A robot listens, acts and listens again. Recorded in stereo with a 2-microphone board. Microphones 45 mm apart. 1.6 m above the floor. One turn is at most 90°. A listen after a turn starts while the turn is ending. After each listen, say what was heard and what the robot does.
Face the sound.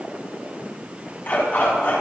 The dog barking: about 50° left or 130° left. Turn 50° left.
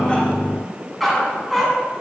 Facing the dog barking, over 4 m away.